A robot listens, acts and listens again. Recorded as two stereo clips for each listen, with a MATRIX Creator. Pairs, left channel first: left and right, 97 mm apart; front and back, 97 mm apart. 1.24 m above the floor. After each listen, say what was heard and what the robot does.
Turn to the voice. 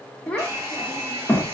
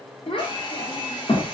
The child speaking: 10° left. Turn 10° left.
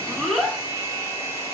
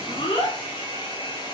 Facing the child speaking.